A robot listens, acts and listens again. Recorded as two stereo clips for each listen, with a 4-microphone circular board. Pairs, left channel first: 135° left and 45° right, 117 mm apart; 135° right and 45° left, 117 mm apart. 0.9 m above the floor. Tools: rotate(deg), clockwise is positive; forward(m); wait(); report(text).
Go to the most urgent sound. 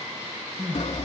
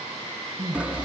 rotate(-20)
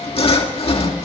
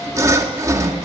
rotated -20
wait()
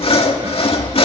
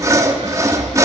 wait()
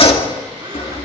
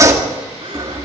report("I heard crying from this way, but can't make it out now. I did not reach it.")